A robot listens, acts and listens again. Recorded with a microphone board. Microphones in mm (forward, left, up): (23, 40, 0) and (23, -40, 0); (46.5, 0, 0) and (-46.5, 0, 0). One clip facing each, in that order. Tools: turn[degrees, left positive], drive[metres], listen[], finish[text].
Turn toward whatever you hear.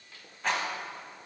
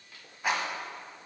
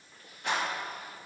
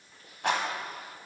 Thought: The rattle: 170° right.
Action: turn[-170]
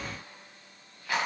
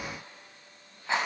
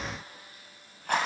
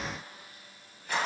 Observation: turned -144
Thought: The rattle is now 25° right.
Action: turn[-25]
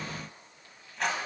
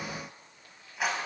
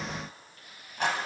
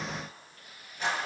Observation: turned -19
Action: finish[Facing the rattle, 1 to 2 m away.]